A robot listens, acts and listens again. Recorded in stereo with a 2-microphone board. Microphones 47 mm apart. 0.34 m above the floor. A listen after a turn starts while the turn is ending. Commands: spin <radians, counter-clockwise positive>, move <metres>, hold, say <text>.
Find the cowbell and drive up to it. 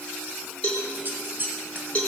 spin 0.52
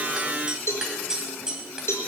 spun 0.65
spin 2.01
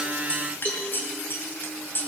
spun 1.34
spin 0.61
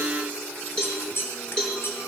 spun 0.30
spin 0.35
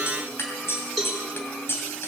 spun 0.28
move 1.0
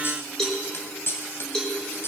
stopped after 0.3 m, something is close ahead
spin 0.17
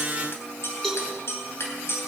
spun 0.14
say Blocked. The cowbell is further on, straight ahead.